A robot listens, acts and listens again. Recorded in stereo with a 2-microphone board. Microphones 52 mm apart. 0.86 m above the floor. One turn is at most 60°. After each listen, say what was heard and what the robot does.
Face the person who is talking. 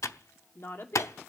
The woman speaking: about 50° left or 130° left. Turn 50° left.
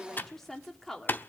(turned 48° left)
Found it: a woman speaking, straight ahead.